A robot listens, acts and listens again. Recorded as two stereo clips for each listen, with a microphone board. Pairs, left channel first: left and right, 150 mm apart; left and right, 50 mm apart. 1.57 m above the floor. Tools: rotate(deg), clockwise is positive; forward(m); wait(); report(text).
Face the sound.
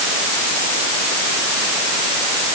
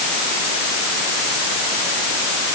wait()
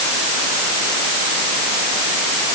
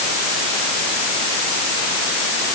wait()
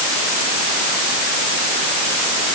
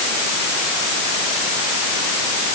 report("I can't make out anything.")